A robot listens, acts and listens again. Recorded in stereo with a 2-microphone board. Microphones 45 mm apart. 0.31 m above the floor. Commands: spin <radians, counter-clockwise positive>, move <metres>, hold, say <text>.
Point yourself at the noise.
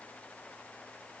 hold
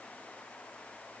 hold
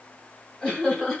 spin 0.52
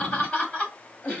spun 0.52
spin 0.44
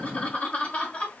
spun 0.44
spin 2.62
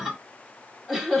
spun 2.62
spin -0.17
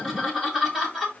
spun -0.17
say Found it: laughter, straight ahead, 1 to 2 m away.